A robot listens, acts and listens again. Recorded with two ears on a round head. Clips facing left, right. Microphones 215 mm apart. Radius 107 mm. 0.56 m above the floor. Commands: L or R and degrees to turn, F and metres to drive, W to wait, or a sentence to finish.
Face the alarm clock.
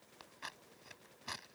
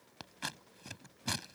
W
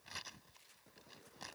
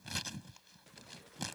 W
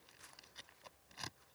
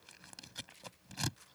I can't make out an alarm clock, only scissors.